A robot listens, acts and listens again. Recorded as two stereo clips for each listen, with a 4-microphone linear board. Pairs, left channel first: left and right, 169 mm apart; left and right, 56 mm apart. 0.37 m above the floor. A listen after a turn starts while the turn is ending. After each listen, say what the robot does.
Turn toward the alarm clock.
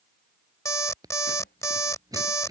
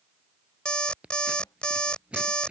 Turn 20° left.
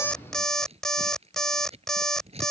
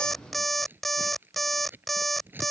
Found it: an alarm clock, straight ahead.